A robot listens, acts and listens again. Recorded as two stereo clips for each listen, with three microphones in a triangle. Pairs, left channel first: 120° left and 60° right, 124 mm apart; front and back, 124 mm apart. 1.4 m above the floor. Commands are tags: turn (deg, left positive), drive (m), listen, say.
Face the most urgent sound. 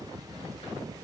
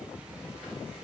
<listen/>
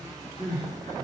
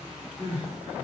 <turn deg="145"/>
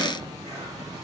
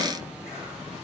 <listen/>
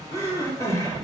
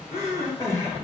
<turn deg="60"/>
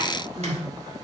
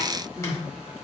<turn deg="-10"/>
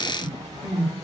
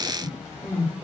<say>Found it: crying, straight ahead.</say>